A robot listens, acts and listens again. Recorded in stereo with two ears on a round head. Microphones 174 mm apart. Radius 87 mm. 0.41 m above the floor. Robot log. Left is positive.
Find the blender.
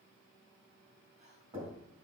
cmd idle
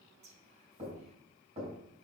cmd idle
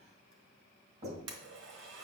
note: The blender: about 65° right or 115° right.
cmd yaw -65
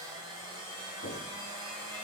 note: So it is at 25° right.
cmd yaw -25
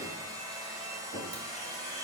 note: The blender is now 20° right.
cmd yaw -20
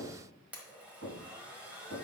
note: The blender is now 10° right.
cmd yaw -10
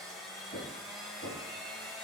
end: Facing the blender.